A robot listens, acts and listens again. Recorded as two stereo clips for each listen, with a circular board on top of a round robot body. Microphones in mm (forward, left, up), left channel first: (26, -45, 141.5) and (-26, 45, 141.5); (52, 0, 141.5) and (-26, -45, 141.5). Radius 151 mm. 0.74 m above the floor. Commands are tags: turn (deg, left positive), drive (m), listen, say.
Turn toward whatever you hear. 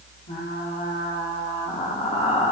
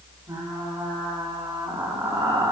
<turn deg="-95"/>
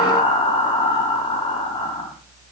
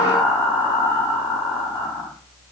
<turn deg="-15"/>
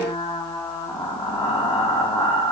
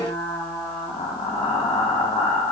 <say>Facing the frying.</say>